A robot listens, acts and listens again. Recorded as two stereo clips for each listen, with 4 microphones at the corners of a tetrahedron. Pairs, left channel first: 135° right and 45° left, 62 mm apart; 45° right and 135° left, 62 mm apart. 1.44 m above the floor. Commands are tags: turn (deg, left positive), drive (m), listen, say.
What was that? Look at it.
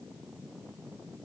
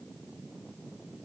<listen/>
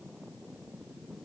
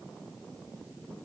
<listen/>
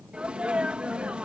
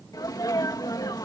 <turn deg="-30"/>
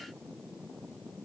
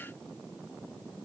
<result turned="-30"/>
<say>I heard a sneeze from this way, but can't make it out now.</say>